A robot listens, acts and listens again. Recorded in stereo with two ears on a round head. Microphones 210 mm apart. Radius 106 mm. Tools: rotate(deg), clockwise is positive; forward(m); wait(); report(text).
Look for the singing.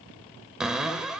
wait()
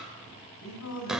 rotate(-90)
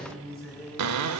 report("Facing the singing, 2 to 4 m away.")